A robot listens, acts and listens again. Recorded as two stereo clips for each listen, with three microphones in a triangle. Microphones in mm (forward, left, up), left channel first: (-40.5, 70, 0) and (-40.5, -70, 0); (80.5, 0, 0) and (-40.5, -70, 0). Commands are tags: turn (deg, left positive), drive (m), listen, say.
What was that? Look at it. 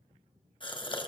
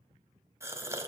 <turn deg="140"/>
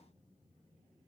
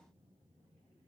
<say>I heard a gasp from this way, but can't make it out now.</say>